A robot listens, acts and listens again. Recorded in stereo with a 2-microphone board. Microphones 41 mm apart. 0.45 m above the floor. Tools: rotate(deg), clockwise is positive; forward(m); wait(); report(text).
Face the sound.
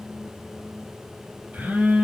rotate(55)
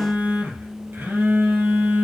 rotate(70)
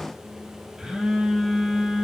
rotate(15)
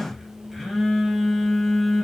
report("Facing the phone buzzing.")